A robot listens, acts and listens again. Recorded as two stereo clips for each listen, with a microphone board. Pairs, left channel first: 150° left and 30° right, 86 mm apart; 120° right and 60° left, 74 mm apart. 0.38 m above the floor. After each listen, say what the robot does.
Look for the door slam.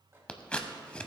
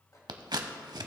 Keep listening.
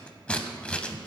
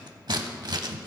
Keep listening.
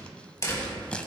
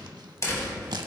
Turn 160° right.
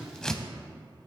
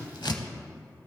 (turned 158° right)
Facing where the door slam came from. I can't hear it now.